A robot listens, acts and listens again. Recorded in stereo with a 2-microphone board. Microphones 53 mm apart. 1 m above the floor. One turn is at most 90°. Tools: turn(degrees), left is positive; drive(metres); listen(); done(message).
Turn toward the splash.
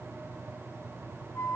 listen()
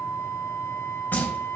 turn(degrees=35)
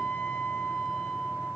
listen()
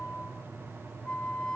done("I heard a splash, but can't make it out now. It was about straight ahead or 110° left.")